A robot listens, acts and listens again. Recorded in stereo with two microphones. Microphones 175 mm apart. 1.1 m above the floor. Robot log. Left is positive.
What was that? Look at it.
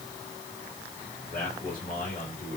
note: The man speaking: about 55° left or 125° left.
cmd yaw +55
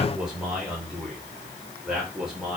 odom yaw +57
end: Found it: a man speaking, straight ahead, over 4 m away.